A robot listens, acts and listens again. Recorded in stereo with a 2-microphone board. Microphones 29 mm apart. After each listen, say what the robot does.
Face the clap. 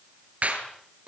Turn 55° right.
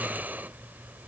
Keep listening.
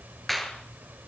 Found it: a clap, straight ahead, over 4 m away.